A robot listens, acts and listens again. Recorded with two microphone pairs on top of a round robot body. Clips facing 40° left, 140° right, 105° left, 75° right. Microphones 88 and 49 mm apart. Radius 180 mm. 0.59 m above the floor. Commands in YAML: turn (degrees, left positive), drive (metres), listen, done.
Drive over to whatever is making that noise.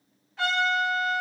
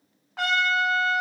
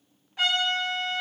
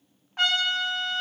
turn: -125
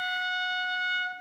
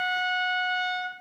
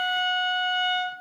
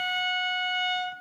drive: 1.0
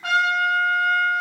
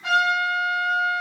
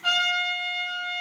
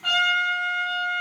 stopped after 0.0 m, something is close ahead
done: "Blocked. The trumpet is further on, straight ahead."